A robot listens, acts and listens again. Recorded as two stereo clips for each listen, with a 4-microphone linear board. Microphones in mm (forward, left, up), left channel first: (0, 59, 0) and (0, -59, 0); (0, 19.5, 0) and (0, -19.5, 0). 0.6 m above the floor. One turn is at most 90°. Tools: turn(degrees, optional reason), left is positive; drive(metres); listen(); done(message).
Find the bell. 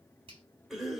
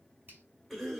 listen()
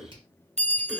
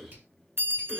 turn(degrees=-65, reason="The bell: about 65° right or 115° right.")
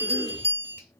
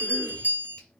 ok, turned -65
turn(degrees=-50, reason="So it is at 50° right.")
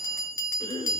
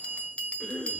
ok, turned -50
turn(degrees=25, reason="The bell is now 25° left.")
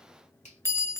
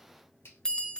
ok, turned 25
turn(degrees=20, reason="The bell is now 20° left.")
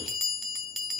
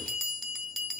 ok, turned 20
done("Found it: a bell, straight ahead.")